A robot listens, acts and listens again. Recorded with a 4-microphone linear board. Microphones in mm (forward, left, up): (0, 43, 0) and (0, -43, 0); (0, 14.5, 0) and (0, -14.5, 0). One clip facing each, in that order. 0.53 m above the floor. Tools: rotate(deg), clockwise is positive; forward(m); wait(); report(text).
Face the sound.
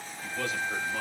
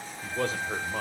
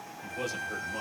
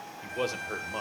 rotate(35)
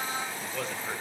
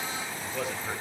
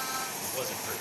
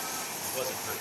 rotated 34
report("Facing the man speaking, 2 to 4 m away.")